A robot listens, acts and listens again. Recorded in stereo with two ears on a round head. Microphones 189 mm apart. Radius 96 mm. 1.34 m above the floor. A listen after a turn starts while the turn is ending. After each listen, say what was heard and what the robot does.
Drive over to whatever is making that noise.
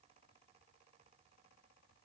Keep listening.
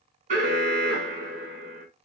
The alarm: about 40° right or 140° right. Turn 40° right.
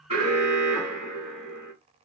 Drive 1.0 m forward.
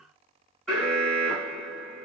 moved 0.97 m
Drive 1.0 m forward.
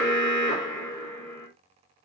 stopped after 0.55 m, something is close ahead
The alarm is now 10° left. Turn 10° left.
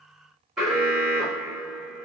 I am next to the alarm.